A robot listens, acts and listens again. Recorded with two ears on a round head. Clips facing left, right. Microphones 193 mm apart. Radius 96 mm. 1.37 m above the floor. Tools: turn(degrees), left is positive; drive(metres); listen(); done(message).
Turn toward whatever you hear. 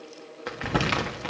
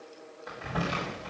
turn(degrees=75)
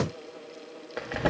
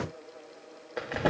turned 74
done("Facing the crumpling, 1 to 2 m away.")